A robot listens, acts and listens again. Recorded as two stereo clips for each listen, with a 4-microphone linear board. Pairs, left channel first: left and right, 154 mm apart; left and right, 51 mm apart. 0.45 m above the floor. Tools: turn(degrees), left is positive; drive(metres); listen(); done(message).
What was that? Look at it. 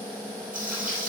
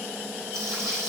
turn(degrees=-65)
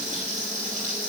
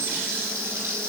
turn(degrees=-50)
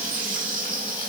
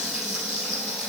turn(degrees=-10)
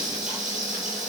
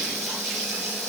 done("Found it: frying, straight ahead, 2 to 4 m away.")